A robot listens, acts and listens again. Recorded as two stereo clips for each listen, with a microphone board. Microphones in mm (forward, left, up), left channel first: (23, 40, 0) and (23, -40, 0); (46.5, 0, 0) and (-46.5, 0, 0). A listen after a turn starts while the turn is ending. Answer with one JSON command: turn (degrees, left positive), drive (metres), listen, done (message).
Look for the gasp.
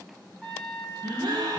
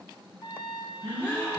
{"turn": -70}
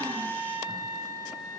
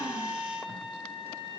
{"done": "Facing where the gasp came from. I can't hear it now."}